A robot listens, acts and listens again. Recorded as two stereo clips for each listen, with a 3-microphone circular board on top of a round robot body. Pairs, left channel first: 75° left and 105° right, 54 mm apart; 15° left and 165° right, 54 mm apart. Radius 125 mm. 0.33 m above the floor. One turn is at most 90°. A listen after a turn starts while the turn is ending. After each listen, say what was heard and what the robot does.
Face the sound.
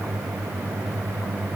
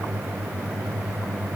Keep listening.
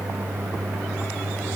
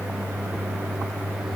Keep listening.
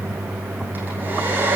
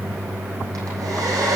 The hair dryer: 165° right. Turn 90° right.
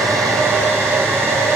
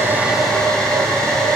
The hair dryer is now 65° right. Turn 65° right.
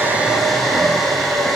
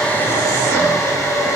The hair dryer is now 15° right. Turn 15° right.
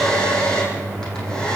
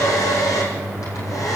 Facing the hair dryer, over 4 m away.